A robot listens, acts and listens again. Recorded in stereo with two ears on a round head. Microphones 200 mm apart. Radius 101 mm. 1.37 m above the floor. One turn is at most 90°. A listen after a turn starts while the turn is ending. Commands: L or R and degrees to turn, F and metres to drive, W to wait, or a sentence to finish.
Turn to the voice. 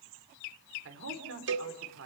R65
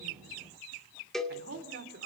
R50
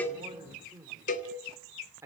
R10
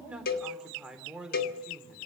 Found it: a man speaking, straight ahead, 2 to 4 m away.